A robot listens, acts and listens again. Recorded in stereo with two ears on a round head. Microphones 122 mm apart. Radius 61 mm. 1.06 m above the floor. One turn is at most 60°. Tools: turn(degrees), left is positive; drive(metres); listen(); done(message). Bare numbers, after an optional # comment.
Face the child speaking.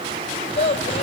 # The child speaking: about 45° left or 135° left.
turn(45)
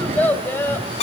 # So it is at 15° left.
turn(15)
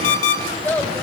# The child speaking is now 15° left.
turn(15)
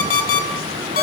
listen()
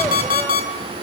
listen()
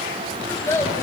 # The child speaking is now 20° left.
turn(20)
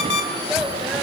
listen()
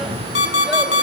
listen()
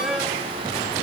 done("Facing where the child speaking came from. I can't hear it now.")